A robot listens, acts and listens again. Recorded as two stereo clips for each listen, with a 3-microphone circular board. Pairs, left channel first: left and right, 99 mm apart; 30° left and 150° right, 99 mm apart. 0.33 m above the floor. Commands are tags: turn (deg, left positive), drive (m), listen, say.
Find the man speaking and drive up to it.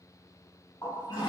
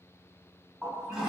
<listen/>
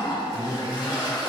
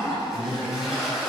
<turn deg="-170"/>
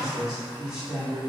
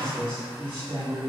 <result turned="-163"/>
<drive m="1.0"/>
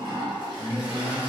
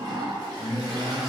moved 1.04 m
<turn deg="-20"/>
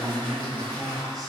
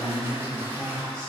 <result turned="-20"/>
<drive m="1.0"/>
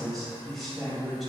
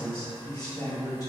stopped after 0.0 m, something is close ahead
<say>I am next to the man speaking.</say>